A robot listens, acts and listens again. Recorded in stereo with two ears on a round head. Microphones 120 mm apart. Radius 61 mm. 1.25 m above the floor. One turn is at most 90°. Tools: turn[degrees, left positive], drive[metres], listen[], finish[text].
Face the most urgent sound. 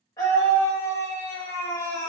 Thought: The scream: about 25° left or 155° left.
Action: turn[25]
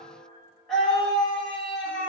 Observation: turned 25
Action: finish[Facing the scream.]